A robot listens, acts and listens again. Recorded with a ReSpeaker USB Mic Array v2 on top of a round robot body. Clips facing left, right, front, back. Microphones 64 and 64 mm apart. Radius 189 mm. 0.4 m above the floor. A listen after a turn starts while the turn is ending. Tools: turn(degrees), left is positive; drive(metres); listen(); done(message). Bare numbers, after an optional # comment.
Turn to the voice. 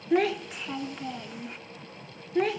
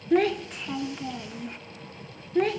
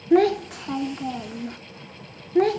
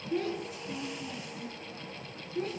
done("Facing the child speaking.")